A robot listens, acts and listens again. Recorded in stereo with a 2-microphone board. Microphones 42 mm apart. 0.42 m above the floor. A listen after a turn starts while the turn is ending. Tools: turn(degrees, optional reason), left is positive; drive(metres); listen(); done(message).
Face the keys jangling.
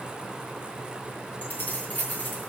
turn(degrees=50, reason="The keys jangling: about 50° left or 130° left.")
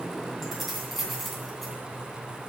done("Facing the keys jangling.")